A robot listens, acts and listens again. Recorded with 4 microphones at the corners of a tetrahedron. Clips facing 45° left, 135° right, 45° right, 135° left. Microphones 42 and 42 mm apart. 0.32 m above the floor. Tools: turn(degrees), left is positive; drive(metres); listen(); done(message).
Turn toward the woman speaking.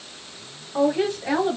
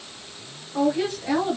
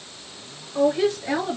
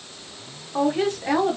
turn(degrees=110)
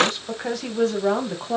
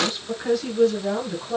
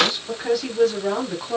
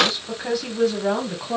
turn(degrees=60)
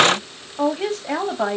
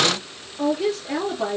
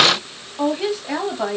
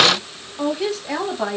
turn(degrees=45)
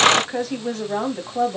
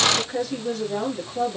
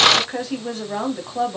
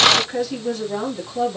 turn(degrees=15)
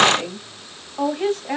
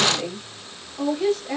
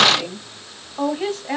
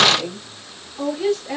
done("Found it: a woman speaking, straight ahead.")